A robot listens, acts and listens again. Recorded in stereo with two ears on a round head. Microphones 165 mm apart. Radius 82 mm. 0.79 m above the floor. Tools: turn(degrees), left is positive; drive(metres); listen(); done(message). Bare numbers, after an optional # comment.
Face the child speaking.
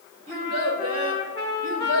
# The child speaking: about 35° right or 145° right.
turn(-35)
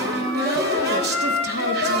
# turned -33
listen()
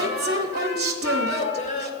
# So it is at 40° left.
turn(40)
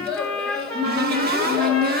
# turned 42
done("Found it: a child speaking, straight ahead.")